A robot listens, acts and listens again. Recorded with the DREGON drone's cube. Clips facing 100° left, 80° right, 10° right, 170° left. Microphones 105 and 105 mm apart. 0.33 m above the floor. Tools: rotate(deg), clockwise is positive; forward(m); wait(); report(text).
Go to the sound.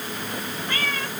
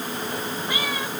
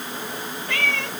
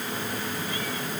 forward(1.0)
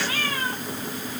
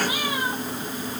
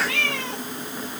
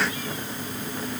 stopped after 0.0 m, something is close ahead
report("Blocked. The cat meowing is further on, straight ahead.")